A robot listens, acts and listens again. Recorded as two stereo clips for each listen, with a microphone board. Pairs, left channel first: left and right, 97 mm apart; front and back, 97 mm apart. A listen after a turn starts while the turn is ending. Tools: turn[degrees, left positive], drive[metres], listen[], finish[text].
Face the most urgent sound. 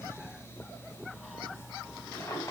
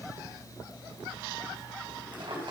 Action: listen[]
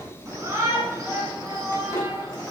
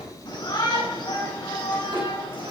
Thought: The shout: 30° right.
Action: turn[-30]
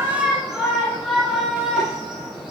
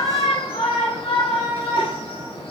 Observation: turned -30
Action: finish[Facing the shout, over 4 m away.]